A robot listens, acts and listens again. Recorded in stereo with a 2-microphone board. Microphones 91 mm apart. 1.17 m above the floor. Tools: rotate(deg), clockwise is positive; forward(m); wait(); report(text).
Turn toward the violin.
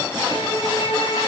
rotate(-90)
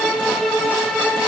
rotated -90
report("Found it: a violin, straight ahead.")